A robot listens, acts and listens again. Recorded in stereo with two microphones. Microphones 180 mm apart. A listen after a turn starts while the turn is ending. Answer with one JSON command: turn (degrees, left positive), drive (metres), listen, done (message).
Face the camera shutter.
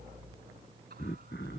{"listen": true}
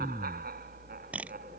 {"turn": -30}
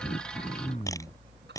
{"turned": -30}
{"turn": 20}
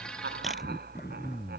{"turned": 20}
{"listen": true}
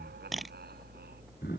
{"done": "Facing the camera shutter."}